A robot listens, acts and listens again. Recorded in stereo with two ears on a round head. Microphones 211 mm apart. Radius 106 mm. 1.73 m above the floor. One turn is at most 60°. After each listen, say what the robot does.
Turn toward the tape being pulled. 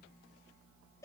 Keep listening.
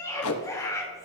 Turn 60° left.
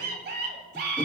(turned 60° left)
Keep listening.
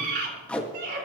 Found it: tape being pulled, straight ahead.